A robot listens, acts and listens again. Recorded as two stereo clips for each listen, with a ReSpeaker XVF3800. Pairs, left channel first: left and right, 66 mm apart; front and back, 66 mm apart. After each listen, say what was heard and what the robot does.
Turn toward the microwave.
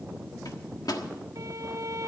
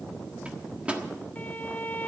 The microwave: 110° left. Turn 110° left.
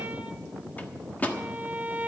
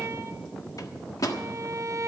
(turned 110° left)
The microwave is now 25° left. Turn 25° left.
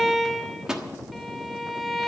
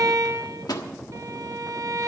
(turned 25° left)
The microwave is now 10° right. Turn 10° right.
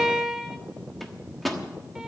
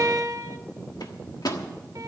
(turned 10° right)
Facing the microwave.